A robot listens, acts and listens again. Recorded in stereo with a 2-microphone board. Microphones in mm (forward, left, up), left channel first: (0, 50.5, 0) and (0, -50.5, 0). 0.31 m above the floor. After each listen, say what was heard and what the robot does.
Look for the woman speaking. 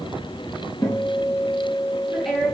Turn 30° left.
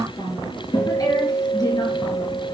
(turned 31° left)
So it is at 140° left. Turn 140° left.
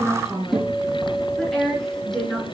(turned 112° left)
Found it: a woman speaking, straight ahead.